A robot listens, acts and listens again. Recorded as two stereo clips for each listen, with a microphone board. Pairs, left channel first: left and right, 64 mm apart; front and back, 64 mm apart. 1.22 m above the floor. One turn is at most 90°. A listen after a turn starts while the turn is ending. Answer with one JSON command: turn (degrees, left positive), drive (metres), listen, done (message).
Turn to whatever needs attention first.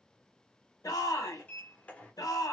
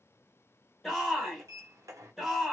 {"turn": 90}
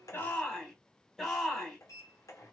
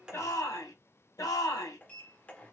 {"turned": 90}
{"done": "Facing the shout."}